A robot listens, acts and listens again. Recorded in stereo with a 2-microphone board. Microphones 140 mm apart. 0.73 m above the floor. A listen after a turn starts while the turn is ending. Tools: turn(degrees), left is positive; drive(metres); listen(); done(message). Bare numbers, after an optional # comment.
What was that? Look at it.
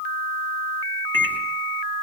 turn(30)
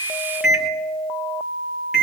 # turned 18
done("Facing the microwave, 2 to 4 m away.")